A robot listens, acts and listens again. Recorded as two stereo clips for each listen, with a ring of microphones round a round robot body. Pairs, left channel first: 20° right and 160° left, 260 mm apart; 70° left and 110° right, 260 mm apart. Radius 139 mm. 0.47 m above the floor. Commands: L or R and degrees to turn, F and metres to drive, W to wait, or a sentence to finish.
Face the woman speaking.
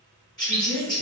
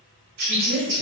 R165
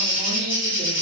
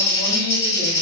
W
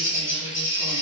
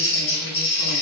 W
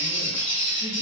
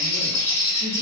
I heard a woman speaking from this way, but can't make it out now.